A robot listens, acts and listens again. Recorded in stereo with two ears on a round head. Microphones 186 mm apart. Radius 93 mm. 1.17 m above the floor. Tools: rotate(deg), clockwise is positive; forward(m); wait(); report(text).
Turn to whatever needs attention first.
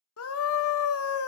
rotate(-90)
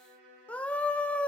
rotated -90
report("Facing the scream, under 1 m away.")